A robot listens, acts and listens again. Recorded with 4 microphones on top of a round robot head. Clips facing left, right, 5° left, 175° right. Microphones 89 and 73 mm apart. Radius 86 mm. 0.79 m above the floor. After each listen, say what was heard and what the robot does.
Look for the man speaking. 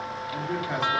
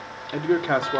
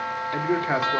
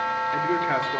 The man speaking: 70° right. Turn 70° right.
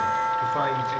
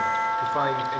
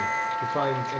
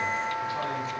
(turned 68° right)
Keep listening.
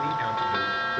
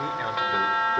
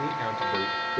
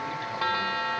Keep listening.
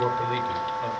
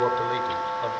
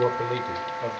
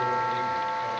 The man speaking is now 20° right. Turn 20° right.
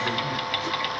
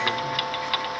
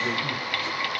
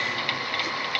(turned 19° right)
Keep listening.
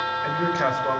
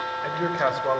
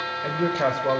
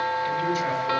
The man speaking is now 10° right. Turn 10° right.
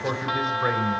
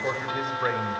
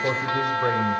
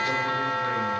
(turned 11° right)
Found it: a man speaking, straight ahead.